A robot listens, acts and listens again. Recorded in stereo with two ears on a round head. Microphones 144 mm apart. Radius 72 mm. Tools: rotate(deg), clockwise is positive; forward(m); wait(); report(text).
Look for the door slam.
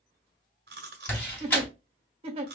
rotate(-30)
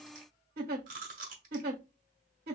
wait()
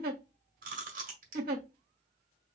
report("I heard a door slam, but can't make it out now. It was about 20° right or 140° left.")